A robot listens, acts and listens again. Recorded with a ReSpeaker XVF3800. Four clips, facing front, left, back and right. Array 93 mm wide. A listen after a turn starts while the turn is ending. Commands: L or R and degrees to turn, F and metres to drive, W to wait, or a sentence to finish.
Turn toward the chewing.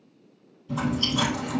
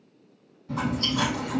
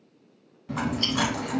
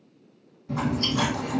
R175
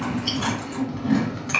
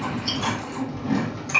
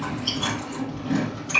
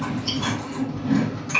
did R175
L10
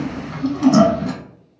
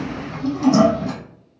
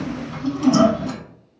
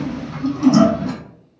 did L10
Found it: chewing, straight ahead, 1 to 2 m away.